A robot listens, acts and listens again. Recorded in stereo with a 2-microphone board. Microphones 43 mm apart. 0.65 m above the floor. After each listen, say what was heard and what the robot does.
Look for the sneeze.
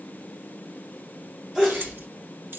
The sneeze: about 20° right or 160° right. Turn 20° right.
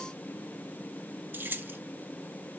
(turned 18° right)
Keep listening.
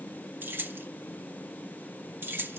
I heard a sneeze, but can't make it out now. It was about straight ahead or 140° right.